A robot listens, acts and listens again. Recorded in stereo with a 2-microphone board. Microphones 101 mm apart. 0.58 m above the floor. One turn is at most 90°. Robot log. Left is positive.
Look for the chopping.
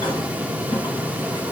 cmd idle
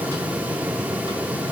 cmd idle
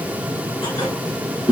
end: I can't make out chopping, only a toilet flushing.